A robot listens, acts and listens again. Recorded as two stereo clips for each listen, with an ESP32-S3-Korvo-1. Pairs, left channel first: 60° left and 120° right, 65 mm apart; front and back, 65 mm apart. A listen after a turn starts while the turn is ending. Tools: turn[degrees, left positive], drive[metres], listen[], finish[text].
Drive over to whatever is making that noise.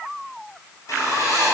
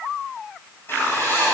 Thought: The writing: 45° left.
Action: turn[45]
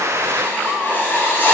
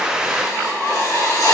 Action: drive[1.0]
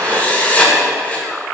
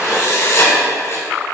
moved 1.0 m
Action: drive[1.0]
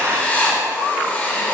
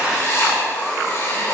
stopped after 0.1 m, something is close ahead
Action: finish[I am next to the writing.]